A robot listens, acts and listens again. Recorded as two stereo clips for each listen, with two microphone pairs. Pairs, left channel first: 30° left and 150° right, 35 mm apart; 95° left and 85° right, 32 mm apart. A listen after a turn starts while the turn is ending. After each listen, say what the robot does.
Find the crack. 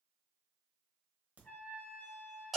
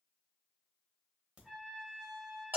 Turn 125° right.
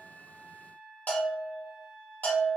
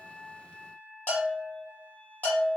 Facing where the crack came from. I can't hear it now.